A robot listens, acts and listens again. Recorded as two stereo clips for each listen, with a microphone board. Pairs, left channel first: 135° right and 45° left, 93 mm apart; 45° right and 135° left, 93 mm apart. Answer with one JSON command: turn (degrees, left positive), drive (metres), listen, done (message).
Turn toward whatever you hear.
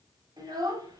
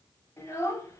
{"turn": 10}
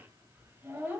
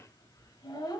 {"turn": -15}
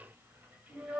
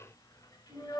{"turn": -30}
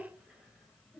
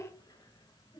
{"turn": -45}
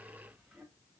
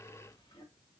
{"listen": true}
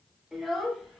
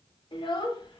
{"turn": -40}
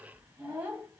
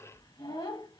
{"turn": -15}
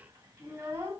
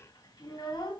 {"done": "Found it: a child speaking, straight ahead."}